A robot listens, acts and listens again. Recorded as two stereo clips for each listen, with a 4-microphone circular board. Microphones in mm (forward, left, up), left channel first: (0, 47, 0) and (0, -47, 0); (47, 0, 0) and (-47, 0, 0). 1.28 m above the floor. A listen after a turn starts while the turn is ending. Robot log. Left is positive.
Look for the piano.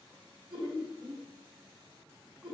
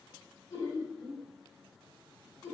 cmd idle
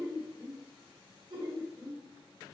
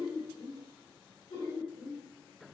cmd idle
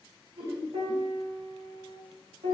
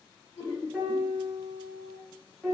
note: The piano: 95° right.
cmd yaw -95
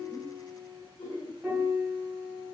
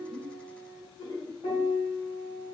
end: Facing the piano, under 1 m away.